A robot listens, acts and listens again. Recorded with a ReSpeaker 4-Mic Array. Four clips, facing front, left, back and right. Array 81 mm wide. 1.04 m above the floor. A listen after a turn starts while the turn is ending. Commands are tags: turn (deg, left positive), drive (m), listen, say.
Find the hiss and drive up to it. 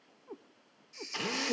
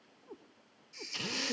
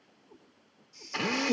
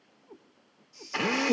<turn deg="45"/>
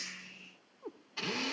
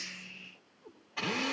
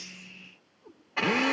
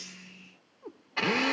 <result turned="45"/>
<listen/>
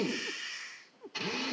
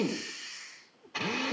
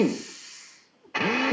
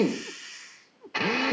<drive m="1.0"/>
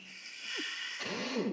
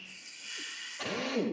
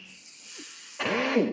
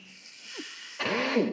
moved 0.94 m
<drive m="1.0"/>
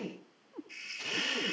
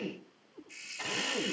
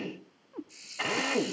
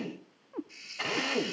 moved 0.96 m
<turn deg="10"/>
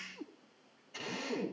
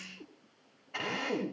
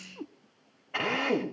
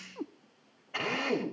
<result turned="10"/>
<listen/>
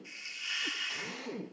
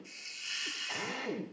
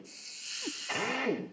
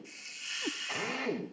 <drive m="1.0"/>
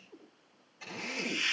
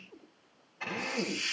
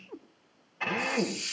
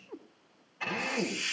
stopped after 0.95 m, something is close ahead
<say>Arrived at the hiss, straight ahead.</say>